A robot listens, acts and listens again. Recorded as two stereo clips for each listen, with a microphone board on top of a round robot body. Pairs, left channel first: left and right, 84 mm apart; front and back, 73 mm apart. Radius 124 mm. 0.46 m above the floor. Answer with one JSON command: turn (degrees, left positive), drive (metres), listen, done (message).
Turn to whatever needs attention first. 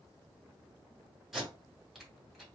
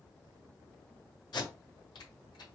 {"listen": true}
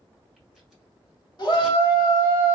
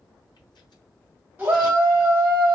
{"turn": 120}
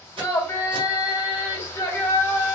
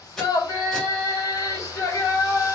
{"turn": 35}
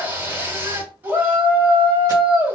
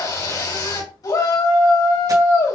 {"turn": -25}
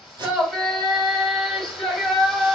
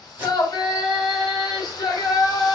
{"done": "Found it: a shout, straight ahead."}